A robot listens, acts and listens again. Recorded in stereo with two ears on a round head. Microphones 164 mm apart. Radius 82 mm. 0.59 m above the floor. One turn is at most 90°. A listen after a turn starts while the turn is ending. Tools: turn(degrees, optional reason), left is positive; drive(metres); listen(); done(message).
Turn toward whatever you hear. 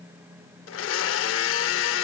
turn(degrees=90)
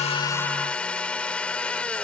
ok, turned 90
done("Facing the blender.")